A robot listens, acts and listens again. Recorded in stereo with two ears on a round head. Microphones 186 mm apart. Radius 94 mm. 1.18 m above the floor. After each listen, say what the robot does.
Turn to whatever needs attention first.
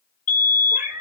Turn 40° left.
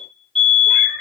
Facing the fire alarm.